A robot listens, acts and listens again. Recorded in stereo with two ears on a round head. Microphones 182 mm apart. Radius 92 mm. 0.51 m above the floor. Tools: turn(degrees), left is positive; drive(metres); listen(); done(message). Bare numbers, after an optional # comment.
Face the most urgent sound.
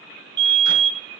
# The fire alarm: about 60° right or 120° right.
turn(-60)
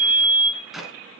# So it is at 45° right.
turn(-45)
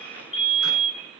# The fire alarm is now 30° left.
turn(30)
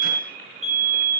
done("Facing the fire alarm, over 4 m away.")